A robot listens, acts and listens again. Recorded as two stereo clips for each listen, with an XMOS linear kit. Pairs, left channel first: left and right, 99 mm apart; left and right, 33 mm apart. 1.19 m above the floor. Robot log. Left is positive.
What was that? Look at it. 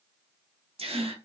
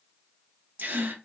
cmd yaw -90
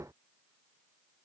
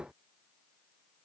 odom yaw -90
end: Facing where the gasp came from. I can't hear it now.